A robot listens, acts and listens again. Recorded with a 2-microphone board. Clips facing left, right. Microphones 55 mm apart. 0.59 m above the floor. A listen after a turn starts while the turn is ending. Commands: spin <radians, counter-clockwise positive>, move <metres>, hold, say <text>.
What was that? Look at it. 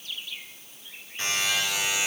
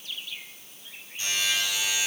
spin 1.13
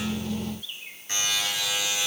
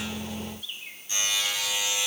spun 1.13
spin 0.87
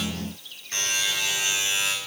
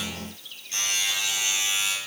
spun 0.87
spin 0.79
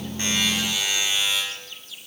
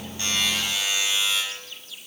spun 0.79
say Facing the buzzer.